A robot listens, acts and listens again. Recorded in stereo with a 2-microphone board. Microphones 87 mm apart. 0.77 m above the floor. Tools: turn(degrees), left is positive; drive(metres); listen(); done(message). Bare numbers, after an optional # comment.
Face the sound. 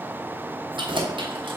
turn(-90)
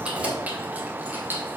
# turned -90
# So it is at 25° right.
turn(-25)
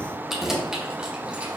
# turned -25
# The keys jangling is now 10° right.
turn(-10)
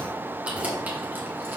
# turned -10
# The keys jangling is now 20° right.
turn(-20)
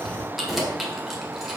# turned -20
done("Facing the keys jangling, 1 to 2 m away.")